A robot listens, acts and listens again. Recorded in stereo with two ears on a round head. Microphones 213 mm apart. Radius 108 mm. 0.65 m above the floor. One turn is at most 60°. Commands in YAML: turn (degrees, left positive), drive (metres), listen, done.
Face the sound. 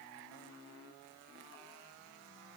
listen: true
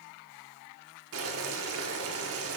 turn: -60
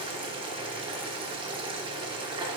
turn: -25
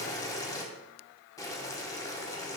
turn: 15
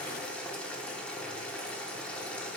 done: "Facing the boiling."